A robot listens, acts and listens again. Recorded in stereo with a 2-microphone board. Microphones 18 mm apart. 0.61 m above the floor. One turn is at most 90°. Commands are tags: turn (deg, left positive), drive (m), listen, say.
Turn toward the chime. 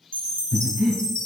<turn deg="70"/>
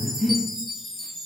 <turn deg="10"/>
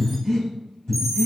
<listen/>
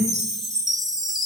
<say>Found it: a chime, straight ahead, 1 to 2 m away.</say>